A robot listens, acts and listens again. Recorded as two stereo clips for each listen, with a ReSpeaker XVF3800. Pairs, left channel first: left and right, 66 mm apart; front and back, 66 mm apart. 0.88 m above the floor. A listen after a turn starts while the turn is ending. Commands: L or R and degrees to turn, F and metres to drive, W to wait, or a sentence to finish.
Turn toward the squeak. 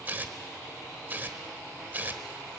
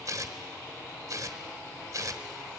W
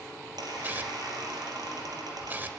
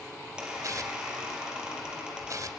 R105
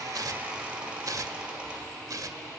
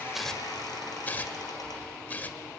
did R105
R15
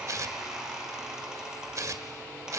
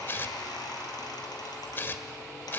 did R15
R10
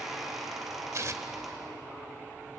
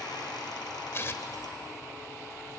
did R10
Facing the squeak.